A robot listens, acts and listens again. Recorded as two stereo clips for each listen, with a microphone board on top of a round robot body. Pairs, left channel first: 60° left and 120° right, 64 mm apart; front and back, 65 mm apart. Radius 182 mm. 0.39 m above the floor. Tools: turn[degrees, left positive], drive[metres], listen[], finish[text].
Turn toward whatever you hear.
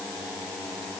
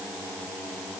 Action: listen[]
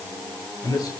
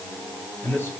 Thought: The man speaking: 55° left.
Action: turn[55]
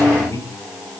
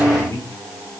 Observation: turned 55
Thought: The man speaking is now 20° left.
Action: turn[20]
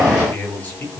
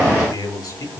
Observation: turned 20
Action: finish[Found it: a man speaking, straight ahead.]